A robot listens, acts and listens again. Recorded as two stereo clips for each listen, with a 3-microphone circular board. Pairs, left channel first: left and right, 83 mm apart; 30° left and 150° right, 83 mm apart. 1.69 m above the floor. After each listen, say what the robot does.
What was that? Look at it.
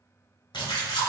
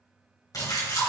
Turn 75° left.
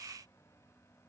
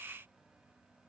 I heard a splash from this way, but can't make it out now.